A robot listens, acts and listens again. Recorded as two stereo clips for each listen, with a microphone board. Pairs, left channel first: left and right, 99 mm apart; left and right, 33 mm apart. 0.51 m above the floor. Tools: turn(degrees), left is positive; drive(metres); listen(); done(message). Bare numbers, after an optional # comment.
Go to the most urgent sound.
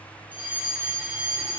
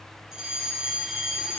# The fire alarm: about 15° right or 165° right.
turn(-15)
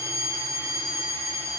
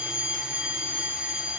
# So it is at 150° right.
turn(-150)
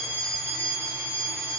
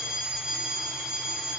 # The fire alarm is now 30° right.
turn(-30)
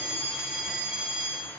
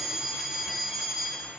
# The fire alarm is now 10° right.
turn(-10)
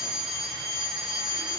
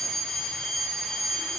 drive(1.0)
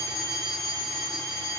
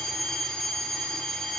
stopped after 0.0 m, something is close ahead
done("Blocked. The fire alarm is further on, straight ahead.")